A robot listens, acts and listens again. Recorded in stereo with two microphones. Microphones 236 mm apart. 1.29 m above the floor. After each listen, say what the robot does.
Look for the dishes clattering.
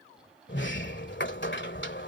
Keep listening.
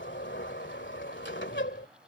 Keep listening.
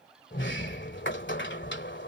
I can't make out dishes clattering to turn to.